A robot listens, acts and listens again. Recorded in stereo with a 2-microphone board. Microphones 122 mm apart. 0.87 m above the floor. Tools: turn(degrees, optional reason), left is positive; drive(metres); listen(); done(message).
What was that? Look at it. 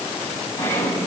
turn(degrees=20, reason="The sawing: about 20° left or 160° left.")
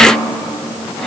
done("Facing the sawing.")